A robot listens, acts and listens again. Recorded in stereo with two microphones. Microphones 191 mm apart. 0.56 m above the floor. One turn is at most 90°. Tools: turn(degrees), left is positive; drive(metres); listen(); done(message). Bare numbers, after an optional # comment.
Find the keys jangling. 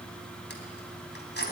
# The keys jangling: about 70° left or 110° left.
turn(70)
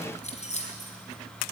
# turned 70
# So it is at 40° left.
turn(40)
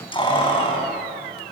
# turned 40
# The keys jangling is now 30° left.
turn(30)
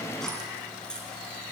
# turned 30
done("Found it: keys jangling, straight ahead.")